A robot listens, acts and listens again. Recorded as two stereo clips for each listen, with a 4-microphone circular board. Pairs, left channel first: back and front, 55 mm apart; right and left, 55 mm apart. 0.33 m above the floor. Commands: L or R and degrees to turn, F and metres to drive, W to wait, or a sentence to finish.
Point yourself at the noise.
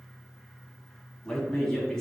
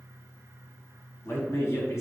R100
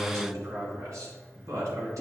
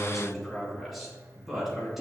Found it: a man speaking, straight ahead, 2 to 4 m away.